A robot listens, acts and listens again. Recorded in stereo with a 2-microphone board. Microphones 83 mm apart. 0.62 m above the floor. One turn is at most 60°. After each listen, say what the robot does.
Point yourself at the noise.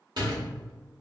Turn 60° right.
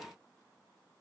Keep listening.
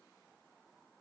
I heard a door slam, but can't make it out now. It was about 5° right or 55° right.